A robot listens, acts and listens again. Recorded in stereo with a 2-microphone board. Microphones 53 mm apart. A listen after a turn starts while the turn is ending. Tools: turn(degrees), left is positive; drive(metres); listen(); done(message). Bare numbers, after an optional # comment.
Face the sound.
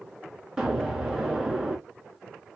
turn(-30)
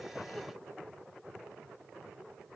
listen()
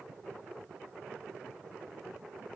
done("I heard an explosion, but can't make it out now. It was about 20° left or 140° right.")